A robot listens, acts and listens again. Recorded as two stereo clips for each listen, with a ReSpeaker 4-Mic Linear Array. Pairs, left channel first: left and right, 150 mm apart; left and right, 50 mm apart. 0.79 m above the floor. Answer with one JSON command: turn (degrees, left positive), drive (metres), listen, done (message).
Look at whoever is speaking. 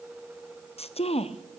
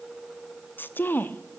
{"turn": 45}
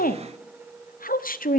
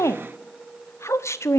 {"turn": 90}
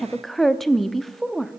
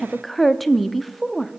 {"done": "Facing the woman speaking, under 1 m away."}